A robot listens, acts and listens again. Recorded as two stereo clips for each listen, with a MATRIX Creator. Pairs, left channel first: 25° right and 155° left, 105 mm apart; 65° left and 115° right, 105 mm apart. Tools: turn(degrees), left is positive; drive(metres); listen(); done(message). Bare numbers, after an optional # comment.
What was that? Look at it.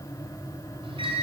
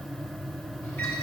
# The microwave: 130° left.
turn(130)
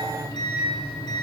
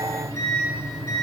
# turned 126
done("Found it: a microwave, straight ahead.")